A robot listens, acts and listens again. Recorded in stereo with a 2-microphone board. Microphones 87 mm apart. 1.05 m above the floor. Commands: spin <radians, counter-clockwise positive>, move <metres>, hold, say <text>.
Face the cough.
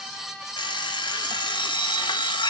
hold
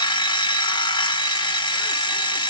hold
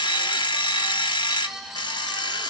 say I can't make out a cough to turn to.